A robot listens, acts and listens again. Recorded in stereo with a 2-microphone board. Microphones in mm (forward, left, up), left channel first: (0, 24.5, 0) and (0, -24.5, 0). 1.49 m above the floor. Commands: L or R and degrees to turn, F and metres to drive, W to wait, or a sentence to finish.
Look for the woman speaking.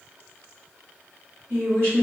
R90
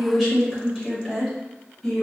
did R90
L15
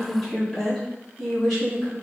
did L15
L15
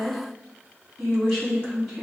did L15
Found it: a woman speaking, straight ahead, 2 to 4 m away.